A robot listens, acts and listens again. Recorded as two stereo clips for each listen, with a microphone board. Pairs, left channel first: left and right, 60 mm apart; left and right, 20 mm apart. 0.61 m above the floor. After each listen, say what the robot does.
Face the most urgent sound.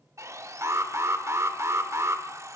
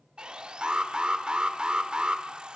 Turn 50° right.
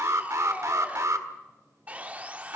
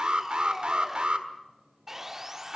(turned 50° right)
Turn 70° right.
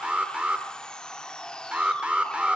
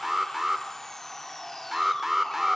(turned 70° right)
Turn 20° right.
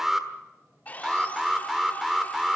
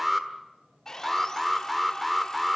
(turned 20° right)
Facing the alarm.